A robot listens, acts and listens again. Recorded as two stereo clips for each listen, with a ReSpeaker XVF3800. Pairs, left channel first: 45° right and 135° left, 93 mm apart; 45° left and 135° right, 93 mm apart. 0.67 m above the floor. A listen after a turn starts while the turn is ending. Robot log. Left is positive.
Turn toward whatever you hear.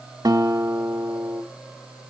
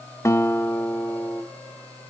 note: The guitar: 100° left.
cmd yaw +100
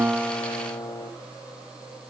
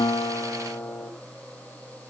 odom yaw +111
note: The guitar is now 15° right.
cmd yaw -15
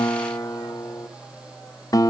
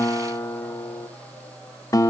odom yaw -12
end: Facing the guitar.